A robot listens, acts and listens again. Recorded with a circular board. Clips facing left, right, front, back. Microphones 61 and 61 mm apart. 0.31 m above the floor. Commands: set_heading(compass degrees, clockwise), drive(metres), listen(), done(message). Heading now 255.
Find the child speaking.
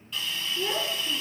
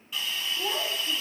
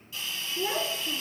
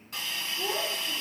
set_heading(220)
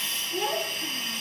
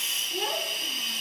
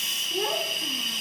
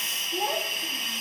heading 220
done("Found it: a child speaking, straight ahead, 2 to 4 m away.")